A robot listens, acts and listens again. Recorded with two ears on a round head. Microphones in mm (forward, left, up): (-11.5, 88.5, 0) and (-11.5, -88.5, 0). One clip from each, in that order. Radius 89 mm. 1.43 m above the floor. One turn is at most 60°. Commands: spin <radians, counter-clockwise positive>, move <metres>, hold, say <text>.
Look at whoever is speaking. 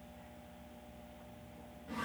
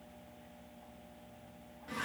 hold
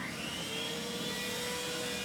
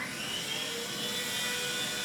hold
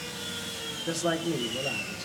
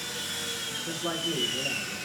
spin 1.05
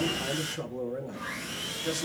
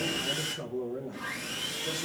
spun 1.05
spin 0.70
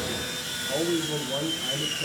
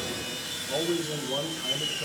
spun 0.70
say Found it: a man speaking, straight ahead.